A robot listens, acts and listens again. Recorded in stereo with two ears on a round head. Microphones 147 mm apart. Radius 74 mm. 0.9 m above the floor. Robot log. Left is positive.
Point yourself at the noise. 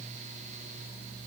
cmd idle
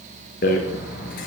note: The rattle: about 55° left or 125° left.
cmd yaw +55
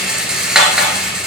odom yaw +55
end: Found it: a rattle, straight ahead.